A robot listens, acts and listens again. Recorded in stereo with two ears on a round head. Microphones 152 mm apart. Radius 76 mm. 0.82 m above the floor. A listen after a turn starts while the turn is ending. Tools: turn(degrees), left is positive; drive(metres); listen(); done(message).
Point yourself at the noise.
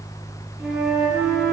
turn(degrees=-30)
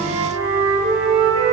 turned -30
turn(degrees=-145)
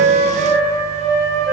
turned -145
turn(degrees=15)
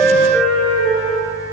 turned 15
done("Found it: a flute, straight ahead, over 4 m away.")